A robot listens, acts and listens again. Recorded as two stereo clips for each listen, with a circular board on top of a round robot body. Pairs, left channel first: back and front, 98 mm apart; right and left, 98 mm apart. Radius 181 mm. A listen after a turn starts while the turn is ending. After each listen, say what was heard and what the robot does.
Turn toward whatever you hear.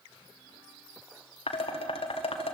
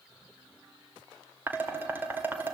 The dishes clattering: 160° left. Turn 160° left.
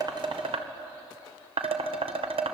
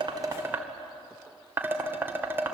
The dishes clattering is now 20° left. Turn 20° left.
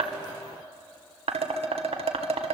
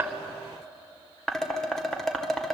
Facing the dishes clattering.